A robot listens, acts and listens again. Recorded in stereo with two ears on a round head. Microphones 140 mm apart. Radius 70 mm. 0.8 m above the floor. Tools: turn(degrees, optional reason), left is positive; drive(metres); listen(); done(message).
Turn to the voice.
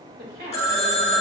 turn(degrees=-65, reason="The woman speaking: about 65° right or 115° right.")
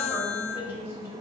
turn(degrees=-15, reason="So it is at 15° right.")
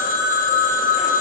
listen()
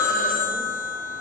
listen()
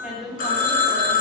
done("Facing the woman speaking.")